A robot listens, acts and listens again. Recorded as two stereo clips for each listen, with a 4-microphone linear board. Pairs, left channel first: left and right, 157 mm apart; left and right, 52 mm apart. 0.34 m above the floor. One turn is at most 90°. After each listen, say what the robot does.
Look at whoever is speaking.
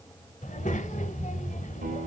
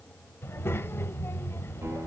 Turn 50° left.
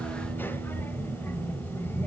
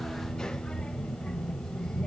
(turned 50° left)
Turn 15° left.
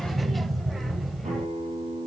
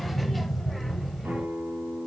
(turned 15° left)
Found it: a child speaking, straight ahead, under 1 m away.